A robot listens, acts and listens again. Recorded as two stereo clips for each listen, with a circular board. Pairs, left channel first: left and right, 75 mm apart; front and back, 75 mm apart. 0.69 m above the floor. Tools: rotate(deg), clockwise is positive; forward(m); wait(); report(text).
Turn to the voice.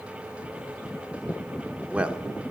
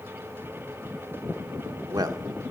rotate(160)
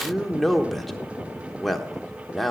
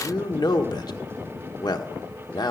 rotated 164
report("Found it: a man speaking, straight ahead.")